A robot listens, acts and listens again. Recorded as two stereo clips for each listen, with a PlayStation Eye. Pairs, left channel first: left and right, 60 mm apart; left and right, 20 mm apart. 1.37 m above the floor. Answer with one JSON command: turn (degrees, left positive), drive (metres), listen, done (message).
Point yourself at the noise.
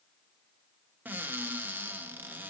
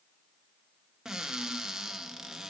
{"turn": -35}
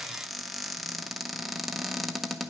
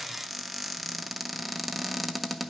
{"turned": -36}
{"done": "Facing the cupboard door."}